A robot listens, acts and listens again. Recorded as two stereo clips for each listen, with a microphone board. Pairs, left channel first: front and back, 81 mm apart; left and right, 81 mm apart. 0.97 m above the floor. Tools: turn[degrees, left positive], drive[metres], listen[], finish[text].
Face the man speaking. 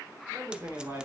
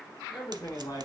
Thought: The man speaking: 125° left.
Action: turn[125]
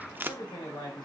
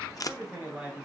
Thought: The man speaking is now 10° right.
Action: turn[-10]
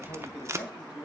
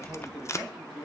Action: finish[Found it: a man speaking, straight ahead, over 4 m away.]